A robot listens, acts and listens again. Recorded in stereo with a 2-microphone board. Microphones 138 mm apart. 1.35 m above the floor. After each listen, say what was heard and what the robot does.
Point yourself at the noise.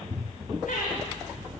Turn 90° left.
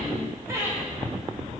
So it is at 20° right. Turn 20° right.
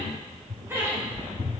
The laughter is now 15° right. Turn 15° right.
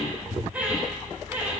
The laughter is now 15° right. Turn 15° right.
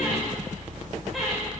Facing the laughter, over 4 m away.